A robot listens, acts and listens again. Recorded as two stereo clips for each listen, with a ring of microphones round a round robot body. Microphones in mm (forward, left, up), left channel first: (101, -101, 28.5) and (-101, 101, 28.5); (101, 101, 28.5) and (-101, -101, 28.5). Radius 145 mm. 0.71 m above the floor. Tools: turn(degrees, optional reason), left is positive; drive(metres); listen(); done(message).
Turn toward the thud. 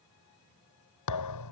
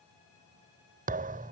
turn(degrees=-70, reason="The thud: 70° right.")
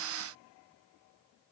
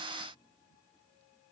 done("Facing where the thud came from. I can't hear it now.")